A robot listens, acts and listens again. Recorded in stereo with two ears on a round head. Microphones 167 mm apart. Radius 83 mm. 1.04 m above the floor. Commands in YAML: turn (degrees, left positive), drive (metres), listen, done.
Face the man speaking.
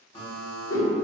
listen: true
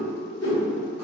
listen: true
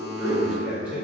turn: -30
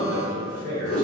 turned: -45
turn: -125
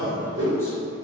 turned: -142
turn: 15
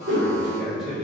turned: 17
done: "Facing the man speaking."